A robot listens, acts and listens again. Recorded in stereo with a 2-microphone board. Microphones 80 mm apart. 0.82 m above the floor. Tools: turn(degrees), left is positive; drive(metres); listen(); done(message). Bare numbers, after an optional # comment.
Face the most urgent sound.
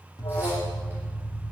# The alarm: about 55° left or 125° left.
turn(55)
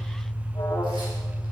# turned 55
# So it is at 60° left.
turn(60)
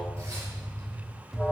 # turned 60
done("Found it: an alarm, straight ahead, 1 to 2 m away.")